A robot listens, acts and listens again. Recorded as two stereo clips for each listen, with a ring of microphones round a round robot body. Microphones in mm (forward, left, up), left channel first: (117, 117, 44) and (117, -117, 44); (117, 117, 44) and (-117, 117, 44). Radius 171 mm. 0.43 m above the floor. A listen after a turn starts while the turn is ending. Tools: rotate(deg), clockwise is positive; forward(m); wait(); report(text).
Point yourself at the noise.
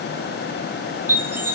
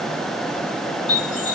rotate(10)
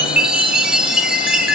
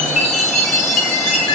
report("Facing the chime.")